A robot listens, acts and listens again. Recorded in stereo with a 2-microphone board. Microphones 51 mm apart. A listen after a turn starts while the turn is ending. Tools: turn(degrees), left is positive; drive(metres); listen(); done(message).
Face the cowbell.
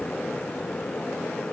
listen()
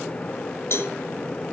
turn(degrees=55)
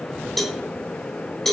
done("Found it: a cowbell, straight ahead, 1 to 2 m away.")